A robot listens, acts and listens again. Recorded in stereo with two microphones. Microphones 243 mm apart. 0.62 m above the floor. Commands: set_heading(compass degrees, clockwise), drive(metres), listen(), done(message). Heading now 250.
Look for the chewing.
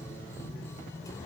listen()
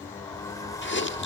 set_heading(200)
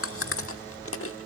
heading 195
set_heading(125)
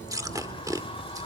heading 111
set_heading(126)
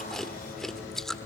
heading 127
done("Facing the chewing, 1 to 2 m away.")